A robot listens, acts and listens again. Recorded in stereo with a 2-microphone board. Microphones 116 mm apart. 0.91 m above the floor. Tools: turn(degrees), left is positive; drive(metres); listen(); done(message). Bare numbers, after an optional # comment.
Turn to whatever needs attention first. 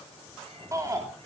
# The shout: about 30° right or 150° right.
turn(-30)
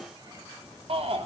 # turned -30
# So it is at 120° right.
turn(-120)
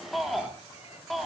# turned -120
done("Facing the shout, 2 to 4 m away.")